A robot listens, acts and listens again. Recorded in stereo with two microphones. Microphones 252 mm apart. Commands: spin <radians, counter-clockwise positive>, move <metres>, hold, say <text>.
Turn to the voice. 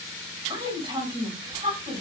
spin -0.35
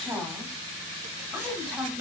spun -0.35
say Facing the woman speaking.